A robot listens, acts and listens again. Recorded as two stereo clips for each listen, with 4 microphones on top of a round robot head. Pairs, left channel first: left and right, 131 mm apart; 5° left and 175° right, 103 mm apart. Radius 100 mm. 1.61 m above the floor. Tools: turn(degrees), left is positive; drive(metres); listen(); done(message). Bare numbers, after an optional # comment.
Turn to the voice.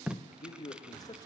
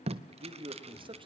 # The man speaking: 155° left.
turn(155)
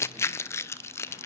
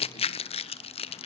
listen()
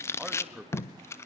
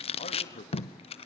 # The man speaking is now 10° right.
turn(-10)
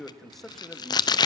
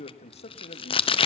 done("Facing the man speaking.")